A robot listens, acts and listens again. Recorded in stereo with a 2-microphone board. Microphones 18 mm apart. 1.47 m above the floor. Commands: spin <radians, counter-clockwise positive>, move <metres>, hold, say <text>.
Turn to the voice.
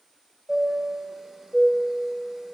hold
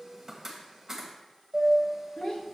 spin 1.05
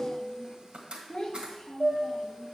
spin 0.79
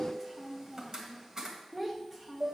spin -0.35
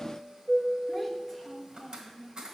say Facing the child speaking, 1 to 2 m away.